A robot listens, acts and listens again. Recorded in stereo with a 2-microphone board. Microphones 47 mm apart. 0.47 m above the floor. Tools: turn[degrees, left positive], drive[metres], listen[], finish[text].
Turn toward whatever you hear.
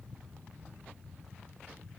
Action: listen[]
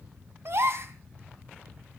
Thought: The gasp: about 55° right or 125° right.
Action: turn[-55]
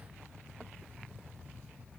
Action: listen[]
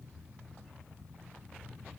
Action: finish[I heard a gasp, but can't make it out now. It was about straight ahead or 70° right.]